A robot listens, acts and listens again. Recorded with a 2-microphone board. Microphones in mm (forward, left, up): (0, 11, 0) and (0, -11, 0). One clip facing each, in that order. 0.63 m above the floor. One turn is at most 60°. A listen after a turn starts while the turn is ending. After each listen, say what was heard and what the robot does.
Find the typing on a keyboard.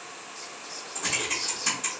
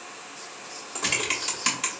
The typing on a keyboard: about 60° right or 120° right. Turn 60° right.
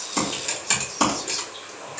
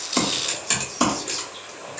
Facing the typing on a keyboard, under 1 m away.